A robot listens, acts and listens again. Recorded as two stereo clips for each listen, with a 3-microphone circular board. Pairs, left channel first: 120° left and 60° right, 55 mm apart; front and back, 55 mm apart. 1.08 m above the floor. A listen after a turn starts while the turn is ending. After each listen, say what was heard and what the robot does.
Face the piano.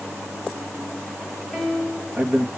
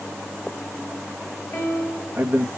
The piano: 20° left. Turn 20° left.
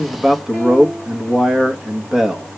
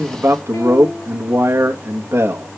Keep listening.
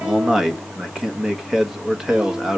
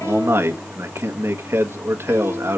Keep listening.
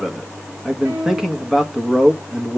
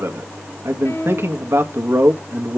Found it: a piano, straight ahead, 2 to 4 m away.